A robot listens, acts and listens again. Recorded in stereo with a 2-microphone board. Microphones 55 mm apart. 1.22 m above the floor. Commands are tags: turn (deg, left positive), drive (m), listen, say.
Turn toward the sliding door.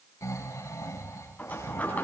<turn deg="30"/>
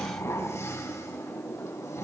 <turn deg="120"/>
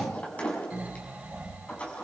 <turn deg="25"/>
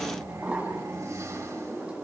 <turn deg="-25"/>
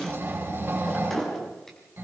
<say>Found it: a sliding door, straight ahead.</say>